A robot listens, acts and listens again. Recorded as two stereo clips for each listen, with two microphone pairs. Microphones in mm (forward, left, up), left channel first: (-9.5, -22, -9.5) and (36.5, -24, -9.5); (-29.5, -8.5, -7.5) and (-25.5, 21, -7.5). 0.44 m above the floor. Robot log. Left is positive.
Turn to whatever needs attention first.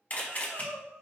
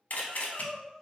note: The crying: 30° right.
cmd yaw -30
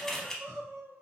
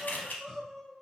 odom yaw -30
note: The crying is now 10° right.
cmd yaw -10
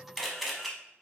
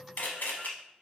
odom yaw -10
cmd idle
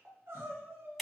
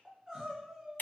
end: Facing the crying.